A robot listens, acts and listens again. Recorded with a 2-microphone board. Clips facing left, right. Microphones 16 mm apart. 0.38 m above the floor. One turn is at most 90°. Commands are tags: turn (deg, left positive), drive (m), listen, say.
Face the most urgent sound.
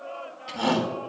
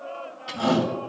<turn deg="55"/>
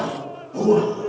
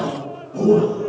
<turn deg="65"/>
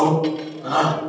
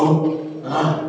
<say>Facing the shout, 2 to 4 m away.</say>